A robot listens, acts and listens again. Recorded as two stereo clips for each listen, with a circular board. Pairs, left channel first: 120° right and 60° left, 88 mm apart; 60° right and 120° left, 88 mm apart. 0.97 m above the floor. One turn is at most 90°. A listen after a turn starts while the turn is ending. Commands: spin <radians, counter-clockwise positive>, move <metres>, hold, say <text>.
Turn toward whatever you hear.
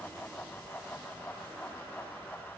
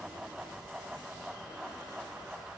hold
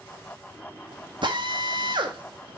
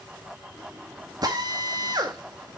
spin 1.48
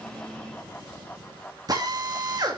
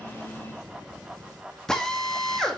spin 0.35
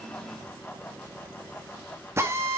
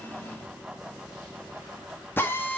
say Found it: a drill, straight ahead, 1 to 2 m away.